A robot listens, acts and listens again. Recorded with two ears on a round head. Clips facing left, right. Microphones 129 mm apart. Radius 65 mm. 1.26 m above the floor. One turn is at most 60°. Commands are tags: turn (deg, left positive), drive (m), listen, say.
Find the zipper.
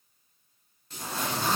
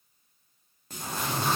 <turn deg="60"/>
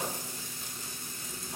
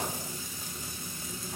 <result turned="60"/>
<listen/>
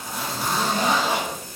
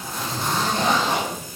<turn deg="10"/>
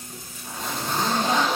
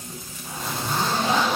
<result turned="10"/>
<say>Facing the zipper.</say>